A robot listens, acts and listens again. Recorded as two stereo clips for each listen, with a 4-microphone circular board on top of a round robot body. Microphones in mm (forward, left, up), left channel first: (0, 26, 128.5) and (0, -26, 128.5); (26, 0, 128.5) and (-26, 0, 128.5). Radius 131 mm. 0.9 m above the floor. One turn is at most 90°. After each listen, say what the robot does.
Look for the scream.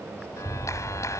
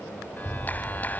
Keep listening.
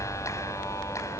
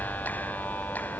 Keep listening.
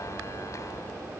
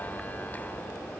I can't make out a scream, only a clap.